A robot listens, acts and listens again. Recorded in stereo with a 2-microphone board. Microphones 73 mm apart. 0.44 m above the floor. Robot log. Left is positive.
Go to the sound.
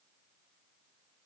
cmd idle
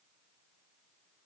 cmd idle
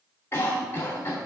note: The cough: about 35° left or 145° left.
cmd yaw +35
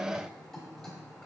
cmd idle
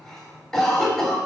cmd fwd 1.0
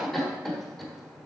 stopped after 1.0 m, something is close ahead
end: I am next to the cough.